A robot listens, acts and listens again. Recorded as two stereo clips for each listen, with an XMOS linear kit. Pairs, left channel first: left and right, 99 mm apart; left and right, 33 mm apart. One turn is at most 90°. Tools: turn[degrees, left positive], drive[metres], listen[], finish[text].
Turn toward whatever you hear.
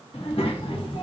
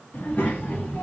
Thought: The child speaking: about 60° left or 120° left.
Action: turn[60]
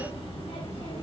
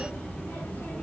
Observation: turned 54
Thought: So it is at 70° left.
Action: turn[70]
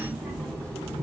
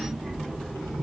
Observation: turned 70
Thought: The child speaking is now 10° left.
Action: turn[10]
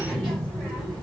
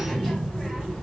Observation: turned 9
Action: finish[Facing the child speaking.]